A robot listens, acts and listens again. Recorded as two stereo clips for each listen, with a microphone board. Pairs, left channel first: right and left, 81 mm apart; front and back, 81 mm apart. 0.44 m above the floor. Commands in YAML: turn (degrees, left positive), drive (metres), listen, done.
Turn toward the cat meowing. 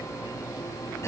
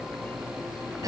listen: true
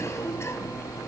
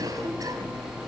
listen: true
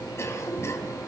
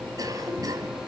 done: "I can't make out a cat meowing to turn to."